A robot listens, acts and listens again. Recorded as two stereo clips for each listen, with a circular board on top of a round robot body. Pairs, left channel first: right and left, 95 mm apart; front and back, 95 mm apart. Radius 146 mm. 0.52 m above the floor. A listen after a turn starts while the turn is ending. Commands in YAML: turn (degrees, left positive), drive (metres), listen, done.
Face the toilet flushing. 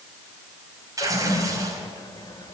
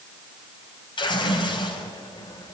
turn: -45
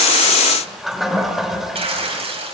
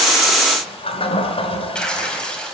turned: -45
done: "Facing the toilet flushing."